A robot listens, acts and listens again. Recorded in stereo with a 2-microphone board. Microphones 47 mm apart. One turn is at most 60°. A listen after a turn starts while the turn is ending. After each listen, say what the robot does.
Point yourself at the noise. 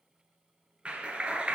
Turn 25° right.
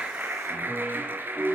Turn 60° right.
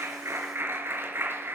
Turn 55° right.
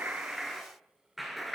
Facing the clap, 2 to 4 m away.